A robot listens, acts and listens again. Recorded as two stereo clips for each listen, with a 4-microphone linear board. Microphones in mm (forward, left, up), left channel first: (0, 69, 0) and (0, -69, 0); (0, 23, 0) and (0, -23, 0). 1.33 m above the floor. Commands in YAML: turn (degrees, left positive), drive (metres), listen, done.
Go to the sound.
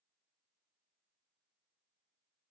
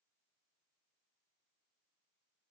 listen: true
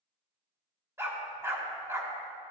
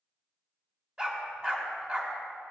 turn: -20
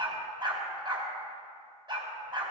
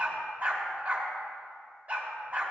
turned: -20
turn: -140
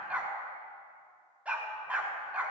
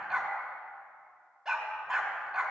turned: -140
turn: -10
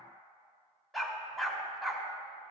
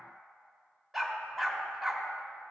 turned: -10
drive: 1.0
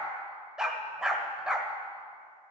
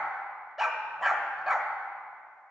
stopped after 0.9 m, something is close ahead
done: "Arrived at the dog barking, straight ahead."